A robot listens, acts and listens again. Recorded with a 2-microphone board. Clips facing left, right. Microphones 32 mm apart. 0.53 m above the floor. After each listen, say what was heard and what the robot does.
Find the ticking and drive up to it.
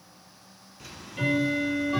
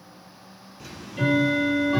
Turn 30° left.
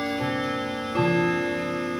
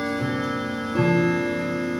So it is at 150° left. Turn 150° left.
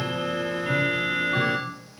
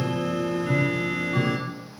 The ticking is now 30° left. Turn 30° left.
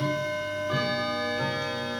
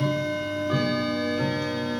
Drive 1.0 m forward.
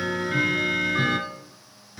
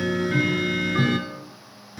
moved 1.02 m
Drive 1.0 m forward.
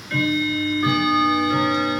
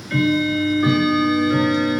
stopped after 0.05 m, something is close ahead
Arrived at the ticking, straight ahead.